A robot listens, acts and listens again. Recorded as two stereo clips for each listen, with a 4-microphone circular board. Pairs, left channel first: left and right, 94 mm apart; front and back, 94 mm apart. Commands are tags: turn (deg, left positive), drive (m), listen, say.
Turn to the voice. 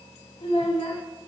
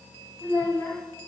<turn deg="65"/>
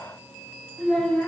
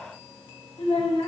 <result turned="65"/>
<turn deg="10"/>
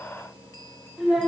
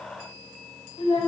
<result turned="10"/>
<say>Facing the child speaking.</say>